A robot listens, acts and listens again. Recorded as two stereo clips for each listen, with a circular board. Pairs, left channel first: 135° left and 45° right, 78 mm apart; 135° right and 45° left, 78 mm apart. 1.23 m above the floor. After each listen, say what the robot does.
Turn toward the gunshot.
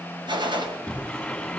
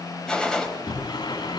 Turn 55° right.
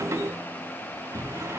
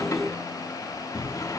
Facing where the gunshot came from. I can't hear it now.